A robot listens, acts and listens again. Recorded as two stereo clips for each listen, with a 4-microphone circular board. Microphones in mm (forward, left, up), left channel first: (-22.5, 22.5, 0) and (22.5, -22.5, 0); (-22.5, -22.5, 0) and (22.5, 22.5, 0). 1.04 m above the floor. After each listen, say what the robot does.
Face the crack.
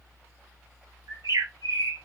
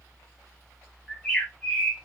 Keep listening.
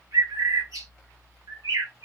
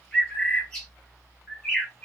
Keep listening.
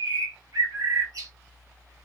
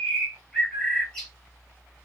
I can't make out a crack to turn to.